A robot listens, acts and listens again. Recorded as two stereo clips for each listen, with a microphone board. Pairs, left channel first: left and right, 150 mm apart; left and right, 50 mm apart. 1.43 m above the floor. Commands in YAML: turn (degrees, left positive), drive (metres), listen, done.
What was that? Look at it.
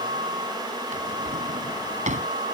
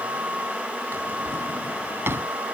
turn: -60
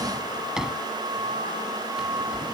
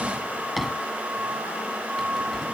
done: "Facing the drawer."